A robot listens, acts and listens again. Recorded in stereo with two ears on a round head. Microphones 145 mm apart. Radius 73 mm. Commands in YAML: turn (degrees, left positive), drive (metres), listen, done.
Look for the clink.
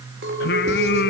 turn: -90
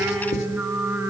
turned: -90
listen: true
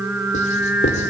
listen: true
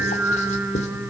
done: "I heard a clink from this way, but can't make it out now."